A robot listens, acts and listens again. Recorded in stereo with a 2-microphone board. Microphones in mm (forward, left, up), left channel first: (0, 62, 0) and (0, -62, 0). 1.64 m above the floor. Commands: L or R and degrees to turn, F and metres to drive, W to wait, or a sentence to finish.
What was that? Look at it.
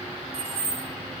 R55
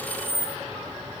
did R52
R75
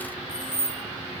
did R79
R10
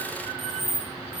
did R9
Facing the keys jangling.